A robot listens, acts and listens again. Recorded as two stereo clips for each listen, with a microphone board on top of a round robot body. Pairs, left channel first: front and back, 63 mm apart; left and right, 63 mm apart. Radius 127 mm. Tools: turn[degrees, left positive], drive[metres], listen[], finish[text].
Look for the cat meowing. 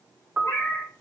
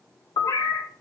Thought: The cat meowing: 55° left.
Action: turn[55]
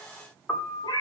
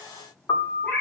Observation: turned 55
Thought: The cat meowing is now 25° left.
Action: turn[25]
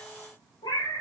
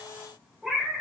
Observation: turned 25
Action: finish[Found it: a cat meowing, straight ahead, 2 to 4 m away.]